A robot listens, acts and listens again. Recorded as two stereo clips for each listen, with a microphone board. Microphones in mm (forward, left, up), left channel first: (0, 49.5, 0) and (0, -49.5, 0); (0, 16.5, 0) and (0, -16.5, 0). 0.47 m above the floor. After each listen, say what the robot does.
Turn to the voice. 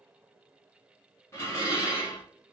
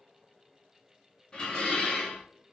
Keep listening.
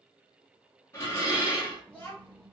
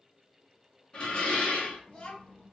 Turn 20° left.
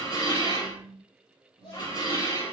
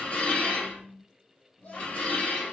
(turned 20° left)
Turn 125° left.
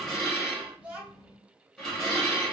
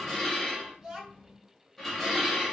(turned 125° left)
Turn 15° right.
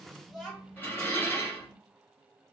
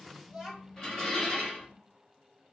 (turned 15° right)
Found it: a child speaking, straight ahead, 1 to 2 m away.